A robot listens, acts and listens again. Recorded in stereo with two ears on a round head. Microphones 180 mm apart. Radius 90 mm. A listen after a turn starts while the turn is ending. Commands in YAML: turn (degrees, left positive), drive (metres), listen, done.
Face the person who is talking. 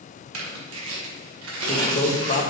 turn: 40
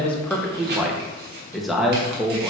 done: "Found it: a man speaking, straight ahead."